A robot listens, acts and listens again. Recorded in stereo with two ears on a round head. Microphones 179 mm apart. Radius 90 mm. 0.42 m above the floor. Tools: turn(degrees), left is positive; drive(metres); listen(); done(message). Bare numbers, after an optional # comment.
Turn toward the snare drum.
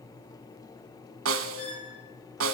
turn(-90)
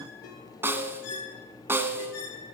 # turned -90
# So it is at 10° right.
turn(-10)
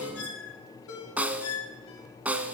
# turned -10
# The snare drum is now 10° right.
turn(-10)
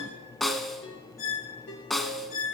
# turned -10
done("Facing the snare drum, 1 to 2 m away.")